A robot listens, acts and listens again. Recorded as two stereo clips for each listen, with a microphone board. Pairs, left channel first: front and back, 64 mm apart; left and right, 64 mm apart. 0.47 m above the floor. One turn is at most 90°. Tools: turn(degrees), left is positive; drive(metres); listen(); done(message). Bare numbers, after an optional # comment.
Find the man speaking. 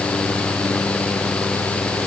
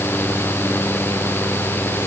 listen()
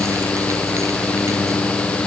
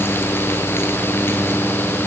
listen()
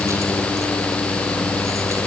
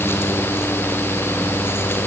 done("I can't make out a man speaking to turn to.")